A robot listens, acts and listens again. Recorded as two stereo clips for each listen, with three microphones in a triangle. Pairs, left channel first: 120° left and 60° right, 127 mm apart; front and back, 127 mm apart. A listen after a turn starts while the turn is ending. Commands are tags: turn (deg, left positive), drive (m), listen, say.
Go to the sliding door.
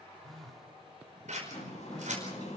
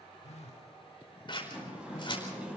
<turn deg="100"/>
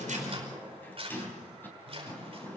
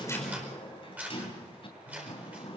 <turn deg="45"/>
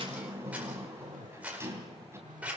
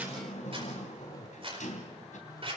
<turn deg="10"/>
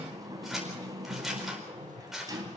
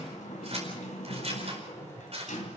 <drive m="1.0"/>
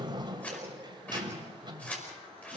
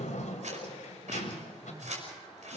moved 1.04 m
<turn deg="-10"/>
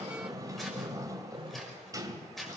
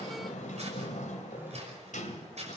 <drive m="1.0"/>
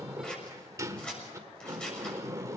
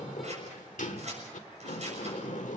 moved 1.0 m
<drive m="1.0"/>
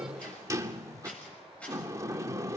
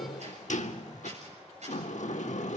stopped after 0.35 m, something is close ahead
<say>I am next to the sliding door.</say>